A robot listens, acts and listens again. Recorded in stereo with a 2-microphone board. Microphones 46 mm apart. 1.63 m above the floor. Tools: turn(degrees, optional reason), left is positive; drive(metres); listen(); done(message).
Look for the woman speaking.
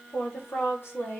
turn(degrees=55, reason="The woman speaking: about 55° left or 125° left.")
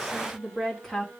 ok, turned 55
done("Found it: a woman speaking, straight ahead, 2 to 4 m away.")